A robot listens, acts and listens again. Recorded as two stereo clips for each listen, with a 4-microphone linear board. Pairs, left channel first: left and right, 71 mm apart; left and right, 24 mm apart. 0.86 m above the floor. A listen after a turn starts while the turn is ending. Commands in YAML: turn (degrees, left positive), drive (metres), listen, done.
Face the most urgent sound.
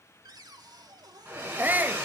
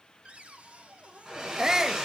turn: -25
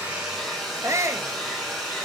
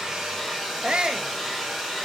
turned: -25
turn: -130
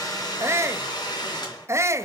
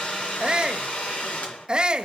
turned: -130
turn: -45
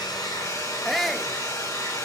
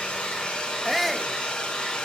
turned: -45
done: "Found it: a shout, straight ahead."